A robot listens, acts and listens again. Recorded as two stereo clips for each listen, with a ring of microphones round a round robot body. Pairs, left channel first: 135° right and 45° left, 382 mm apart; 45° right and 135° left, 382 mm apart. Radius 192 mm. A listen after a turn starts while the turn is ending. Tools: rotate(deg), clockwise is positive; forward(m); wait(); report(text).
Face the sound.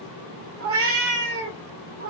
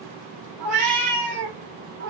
rotate(-115)
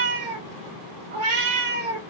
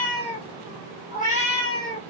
rotate(-35)
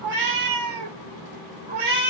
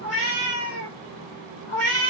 rotate(-10)
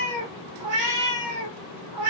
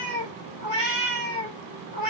report("Found it: a cat meowing, straight ahead, 1 to 2 m away.")